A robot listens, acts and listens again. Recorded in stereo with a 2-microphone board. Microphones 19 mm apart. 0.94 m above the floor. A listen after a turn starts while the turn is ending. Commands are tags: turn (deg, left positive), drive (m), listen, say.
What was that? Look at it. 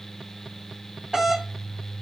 <turn deg="-35"/>
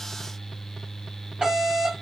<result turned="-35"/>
<turn deg="-105"/>
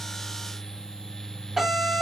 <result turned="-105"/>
<turn deg="-20"/>
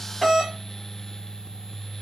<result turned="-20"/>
<say>Found it: a doorbell, straight ahead, 1 to 2 m away.</say>